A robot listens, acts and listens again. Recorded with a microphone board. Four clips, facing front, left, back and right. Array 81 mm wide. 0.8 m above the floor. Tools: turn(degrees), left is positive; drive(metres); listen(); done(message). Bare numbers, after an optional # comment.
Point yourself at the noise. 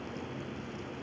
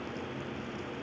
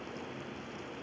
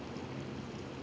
listen()
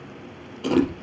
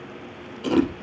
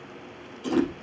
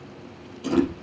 # The chewing: 20° left.
turn(20)
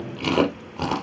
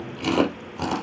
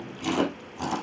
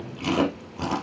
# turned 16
done("Facing the chewing.")